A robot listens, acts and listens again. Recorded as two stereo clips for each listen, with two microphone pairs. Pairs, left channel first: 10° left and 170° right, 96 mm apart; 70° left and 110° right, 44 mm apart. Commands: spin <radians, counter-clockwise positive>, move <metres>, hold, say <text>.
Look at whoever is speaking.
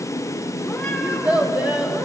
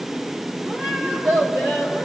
spin -1.75
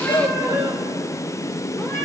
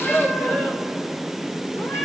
spin 0.52
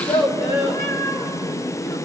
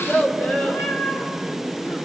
spin 0.26
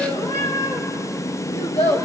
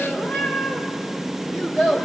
say Found it: a child speaking, straight ahead, 2 to 4 m away.